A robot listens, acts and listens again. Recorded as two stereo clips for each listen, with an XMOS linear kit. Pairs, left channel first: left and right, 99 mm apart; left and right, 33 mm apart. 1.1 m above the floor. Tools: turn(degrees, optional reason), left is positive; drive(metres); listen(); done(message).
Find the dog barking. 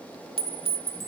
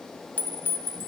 listen()
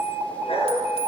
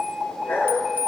turn(degrees=90)
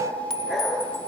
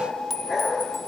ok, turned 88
done("Found it: a dog barking, straight ahead, over 4 m away.")